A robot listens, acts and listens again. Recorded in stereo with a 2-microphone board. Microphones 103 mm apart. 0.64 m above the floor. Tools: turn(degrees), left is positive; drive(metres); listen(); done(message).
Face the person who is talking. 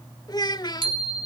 turn(degrees=40)
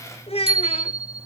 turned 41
turn(degrees=95)
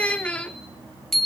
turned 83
turn(degrees=15)
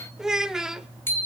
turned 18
done("Found it: a child speaking, straight ahead.")